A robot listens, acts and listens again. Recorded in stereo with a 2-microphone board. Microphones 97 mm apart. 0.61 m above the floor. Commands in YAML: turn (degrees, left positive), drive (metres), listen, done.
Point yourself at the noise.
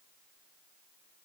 listen: true
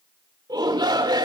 turn: -45
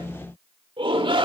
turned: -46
turn: -80
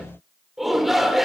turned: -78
done: "Facing the shout, 2 to 4 m away."